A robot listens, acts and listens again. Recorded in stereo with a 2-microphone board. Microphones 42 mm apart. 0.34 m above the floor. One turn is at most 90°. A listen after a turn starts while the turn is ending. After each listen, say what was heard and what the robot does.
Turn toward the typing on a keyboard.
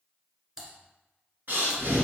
Turn 30° right.
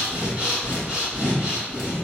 Keep listening.
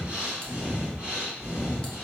Keep listening.
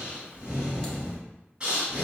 I heard typing on a keyboard, but can't make it out now. It was about 15° left or 135° right.